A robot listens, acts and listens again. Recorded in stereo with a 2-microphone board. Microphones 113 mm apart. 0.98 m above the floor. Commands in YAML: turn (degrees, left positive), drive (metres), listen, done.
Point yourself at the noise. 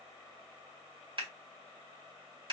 turn: -50
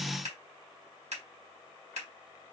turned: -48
turn: -80
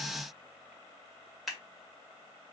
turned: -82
done: "Facing the scissors, 1 to 2 m away."